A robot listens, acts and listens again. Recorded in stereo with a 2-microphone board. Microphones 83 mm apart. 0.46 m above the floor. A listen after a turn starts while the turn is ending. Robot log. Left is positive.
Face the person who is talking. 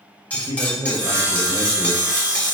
note: The man speaking: about 50° right or 130° right.
cmd yaw -50
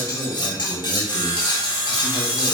cmd idle
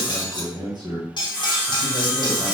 note: So it is at 70° right.
cmd yaw -70
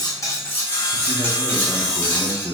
note: The man speaking is now 10° left.
cmd yaw +10
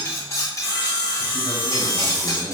cmd idle
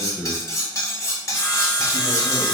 end: Facing the man speaking.